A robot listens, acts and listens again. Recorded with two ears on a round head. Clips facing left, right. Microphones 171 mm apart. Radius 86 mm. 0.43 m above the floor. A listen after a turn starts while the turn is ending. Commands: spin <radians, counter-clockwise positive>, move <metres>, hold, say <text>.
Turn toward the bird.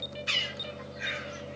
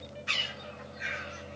spin 0.79
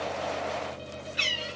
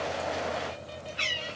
spin 1.40
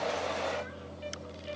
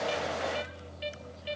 hold
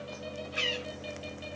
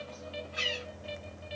spin 0.70
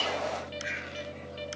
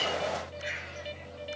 say Facing the bird.